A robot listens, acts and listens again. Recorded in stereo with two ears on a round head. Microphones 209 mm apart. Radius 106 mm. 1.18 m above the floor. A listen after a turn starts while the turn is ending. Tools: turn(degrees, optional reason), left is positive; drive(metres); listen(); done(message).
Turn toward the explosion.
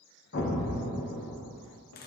turn(degrees=45, reason="The explosion: about 45° left or 135° left.")
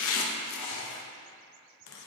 listen()
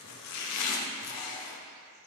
done("I heard an explosion, but can't make it out now. It was about straight ahead or 90° left.")